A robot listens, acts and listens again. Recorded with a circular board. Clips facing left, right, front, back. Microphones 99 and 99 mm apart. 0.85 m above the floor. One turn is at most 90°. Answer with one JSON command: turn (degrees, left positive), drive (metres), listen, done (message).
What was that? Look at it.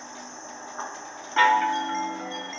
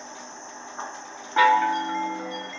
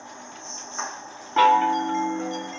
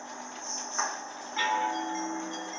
{"turn": -10}
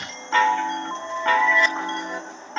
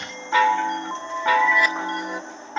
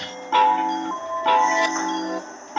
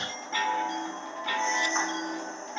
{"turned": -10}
{"done": "Found it: a chime, straight ahead, 1 to 2 m away."}